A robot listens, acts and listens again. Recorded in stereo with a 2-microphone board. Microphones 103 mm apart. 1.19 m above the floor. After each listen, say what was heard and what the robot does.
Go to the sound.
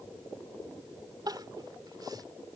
The crying: about 40° right or 140° right. Turn 40° right.
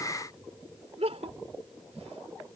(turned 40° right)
So it is at 100° right. Turn 100° right.
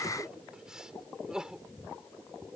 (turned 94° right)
Drive 1.0 m forward.
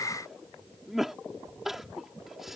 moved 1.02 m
Drive 1.0 m forward.
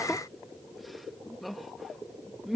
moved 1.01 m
Drive 1.0 m forward.
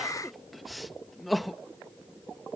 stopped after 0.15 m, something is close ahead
Arrived at the crying, straight ahead.